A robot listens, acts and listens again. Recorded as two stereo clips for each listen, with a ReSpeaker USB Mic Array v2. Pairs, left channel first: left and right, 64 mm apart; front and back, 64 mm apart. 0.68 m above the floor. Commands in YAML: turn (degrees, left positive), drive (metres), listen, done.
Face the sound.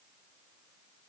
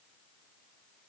listen: true
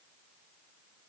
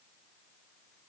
listen: true
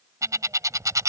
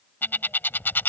turn: -60
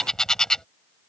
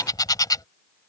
turn: 10
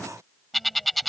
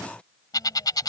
done: "Found it: a bird, straight ahead."